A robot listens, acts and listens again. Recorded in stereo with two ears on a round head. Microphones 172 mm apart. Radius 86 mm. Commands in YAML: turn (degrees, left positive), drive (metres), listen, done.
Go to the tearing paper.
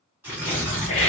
turn: -30
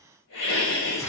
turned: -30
turn: 20
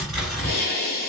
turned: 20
drive: 1.0
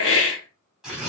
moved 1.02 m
drive: 1.0
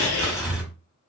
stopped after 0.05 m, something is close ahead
done: "I am next to the tearing paper."